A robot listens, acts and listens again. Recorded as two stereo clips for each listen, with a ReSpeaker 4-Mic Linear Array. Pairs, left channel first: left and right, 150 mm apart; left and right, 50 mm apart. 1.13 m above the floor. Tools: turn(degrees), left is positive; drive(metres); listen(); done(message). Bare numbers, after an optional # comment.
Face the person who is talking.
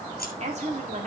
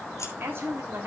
# The woman speaking: about 50° right or 130° right.
turn(-50)
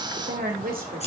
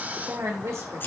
# So it is at 70° right.
turn(-70)
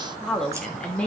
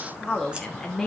# The woman speaking is now 10° left.
turn(10)
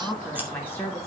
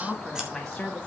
# The woman speaking is now 15° left.
turn(15)
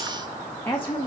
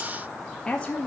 # The woman speaking is now 20° left.
turn(20)
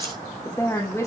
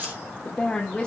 # The woman speaking is now 10° left.
turn(10)
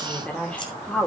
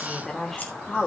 done("Found it: a woman speaking, straight ahead.")